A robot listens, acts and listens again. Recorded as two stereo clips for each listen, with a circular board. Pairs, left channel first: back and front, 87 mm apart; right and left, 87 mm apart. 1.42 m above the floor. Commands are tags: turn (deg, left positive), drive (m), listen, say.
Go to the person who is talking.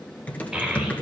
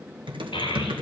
<turn deg="-85"/>
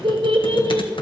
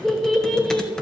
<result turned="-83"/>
<drive m="1.0"/>
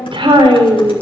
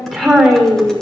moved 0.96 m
<drive m="1.0"/>
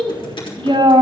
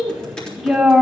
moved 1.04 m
<drive m="1.0"/>
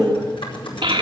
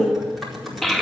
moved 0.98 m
<drive m="1.0"/>
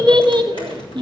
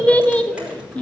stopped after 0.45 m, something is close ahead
<turn deg="-15"/>
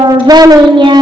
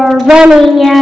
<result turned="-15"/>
<say>Arrived at the child speaking, straight ahead.</say>